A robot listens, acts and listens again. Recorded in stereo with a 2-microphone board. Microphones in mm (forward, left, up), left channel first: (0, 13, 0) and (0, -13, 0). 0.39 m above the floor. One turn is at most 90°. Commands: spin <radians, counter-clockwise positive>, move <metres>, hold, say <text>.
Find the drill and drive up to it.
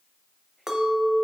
hold
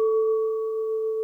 hold
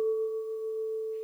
say I can't make out a drill to turn to.